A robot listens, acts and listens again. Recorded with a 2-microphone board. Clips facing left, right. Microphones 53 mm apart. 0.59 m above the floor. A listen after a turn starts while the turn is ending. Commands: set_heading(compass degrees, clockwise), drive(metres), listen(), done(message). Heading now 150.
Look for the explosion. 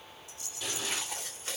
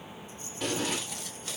set_heading(195)
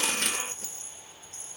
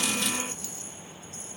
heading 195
listen()
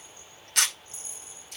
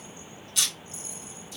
done("I heard an explosion, but can't make it out now. It was about straight ahead or 90° right.")